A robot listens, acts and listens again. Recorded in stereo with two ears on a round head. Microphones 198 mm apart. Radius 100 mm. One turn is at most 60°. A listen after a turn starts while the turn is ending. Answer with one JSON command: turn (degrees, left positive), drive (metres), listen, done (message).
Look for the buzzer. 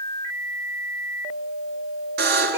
{"turn": -45}
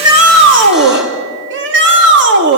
{"listen": true}
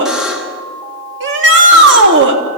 {"done": "Facing the buzzer."}